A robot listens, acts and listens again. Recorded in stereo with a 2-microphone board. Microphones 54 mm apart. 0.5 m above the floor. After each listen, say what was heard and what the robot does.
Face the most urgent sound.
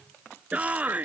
The shout: about 25° right or 155° right. Turn 25° right.
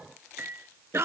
So it is at 130° right. Turn 130° right.
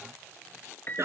The shout is now 55° right. Turn 55° right.
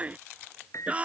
The shout is now 25° right. Turn 25° right.
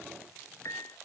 Keep listening.
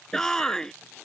The shout is now 10° left. Turn 10° left.
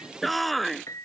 Facing the shout.